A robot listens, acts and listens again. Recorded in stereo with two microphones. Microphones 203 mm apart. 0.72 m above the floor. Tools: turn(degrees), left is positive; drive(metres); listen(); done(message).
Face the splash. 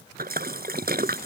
turn(degrees=-55)
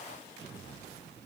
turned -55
listen()
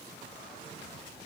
done("I heard a splash, but can't make it out now. It was about straight ahead or 70° right.")